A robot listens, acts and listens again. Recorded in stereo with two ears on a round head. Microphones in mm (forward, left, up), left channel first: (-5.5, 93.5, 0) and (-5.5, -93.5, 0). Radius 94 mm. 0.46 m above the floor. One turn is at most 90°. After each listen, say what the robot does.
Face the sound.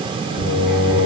Turn 40° left.
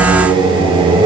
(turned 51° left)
Turn 25° right.
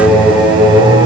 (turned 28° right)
Turn 15° right.
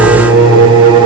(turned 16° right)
Turn 20° right.
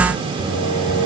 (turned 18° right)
Turn 20° right.
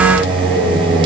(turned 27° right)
Facing the singing.